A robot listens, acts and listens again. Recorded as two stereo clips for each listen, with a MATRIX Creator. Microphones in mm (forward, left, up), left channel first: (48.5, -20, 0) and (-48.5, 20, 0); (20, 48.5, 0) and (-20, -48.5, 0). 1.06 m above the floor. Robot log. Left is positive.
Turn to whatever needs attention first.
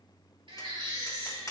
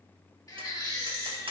note: The baby crying: 120° left.
cmd yaw +120
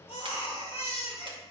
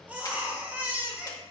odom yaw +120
note: The baby crying is now 40° right.
cmd yaw -40
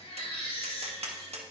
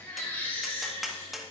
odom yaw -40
end: Found it: a baby crying, straight ahead.